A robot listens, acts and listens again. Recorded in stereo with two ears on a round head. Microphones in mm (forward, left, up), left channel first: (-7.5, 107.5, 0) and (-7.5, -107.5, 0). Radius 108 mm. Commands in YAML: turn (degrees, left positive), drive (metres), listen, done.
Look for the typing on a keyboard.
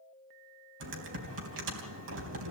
turn: -55
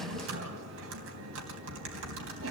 turn: -60
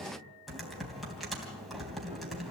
done: "Found it: typing on a keyboard, straight ahead, 2 to 4 m away."